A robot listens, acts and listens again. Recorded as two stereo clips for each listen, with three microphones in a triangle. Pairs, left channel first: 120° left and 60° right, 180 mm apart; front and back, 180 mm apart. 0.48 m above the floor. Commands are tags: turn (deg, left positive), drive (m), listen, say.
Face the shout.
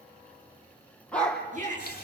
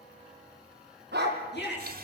<turn deg="-15"/>
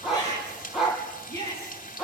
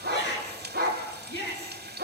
<turn deg="-10"/>
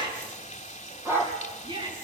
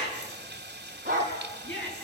<say>Facing the shout.</say>